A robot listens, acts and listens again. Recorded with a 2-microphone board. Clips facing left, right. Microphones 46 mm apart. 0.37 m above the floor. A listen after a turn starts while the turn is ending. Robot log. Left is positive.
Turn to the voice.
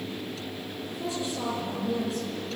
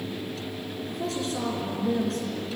note: The woman speaking: about 65° right or 115° right.
cmd yaw -65
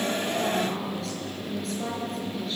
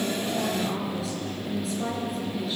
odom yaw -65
end: Found it: a woman speaking, straight ahead.